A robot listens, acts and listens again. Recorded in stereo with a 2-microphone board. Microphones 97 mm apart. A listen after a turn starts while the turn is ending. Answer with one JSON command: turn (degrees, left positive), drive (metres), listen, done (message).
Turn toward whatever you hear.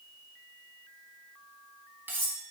{"turn": -25}
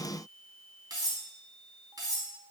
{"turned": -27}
{"turn": -130}
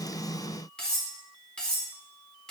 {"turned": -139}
{"turn": 10}
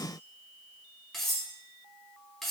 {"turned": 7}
{"done": "Found it: cutlery clinking, straight ahead."}